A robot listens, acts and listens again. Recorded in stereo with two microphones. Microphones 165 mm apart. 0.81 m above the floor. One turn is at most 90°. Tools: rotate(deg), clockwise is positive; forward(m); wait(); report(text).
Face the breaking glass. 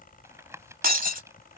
rotate(60)
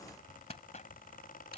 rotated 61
wait()
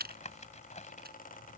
report("I heard breaking glass, but can't make it out now. It was about straight ahead or 60° right.")